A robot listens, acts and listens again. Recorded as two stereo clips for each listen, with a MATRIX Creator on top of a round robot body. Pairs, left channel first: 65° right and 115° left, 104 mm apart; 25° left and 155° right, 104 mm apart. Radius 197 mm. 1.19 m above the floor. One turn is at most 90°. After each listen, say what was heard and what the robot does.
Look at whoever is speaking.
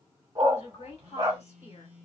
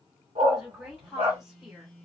The woman speaking: 75° right. Turn 75° right.
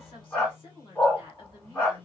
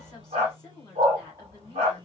The woman speaking is now 30° right. Turn 30° right.
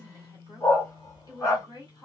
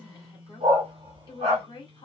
The woman speaking is now 15° right. Turn 15° right.
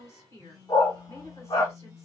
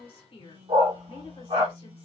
Facing the woman speaking.